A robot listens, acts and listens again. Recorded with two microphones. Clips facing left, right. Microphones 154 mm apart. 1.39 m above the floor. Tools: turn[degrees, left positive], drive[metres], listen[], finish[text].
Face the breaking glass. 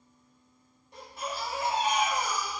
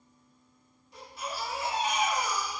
Action: listen[]
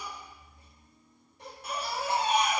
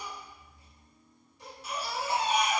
Action: listen[]
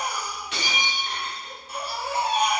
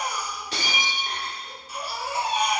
Thought: The breaking glass: about 35° right or 145° right.
Action: turn[-35]
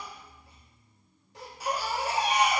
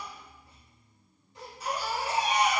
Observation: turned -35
Action: listen[]
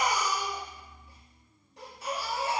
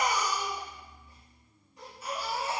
Action: finish[I heard breaking glass, but can't make it out now. It was about straight ahead or 110° right.]